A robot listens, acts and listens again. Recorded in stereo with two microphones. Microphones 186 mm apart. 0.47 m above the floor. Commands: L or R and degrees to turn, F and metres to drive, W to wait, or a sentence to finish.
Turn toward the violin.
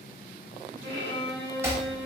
R65
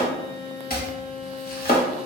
R40
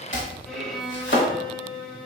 Facing the violin.